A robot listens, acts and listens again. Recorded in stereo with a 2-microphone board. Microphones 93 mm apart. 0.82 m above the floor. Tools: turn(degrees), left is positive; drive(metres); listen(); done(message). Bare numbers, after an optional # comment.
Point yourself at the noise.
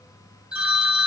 turn(-30)
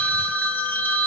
# So it is at 20° left.
turn(20)
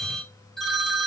done("Found it: a phone ringing, straight ahead.")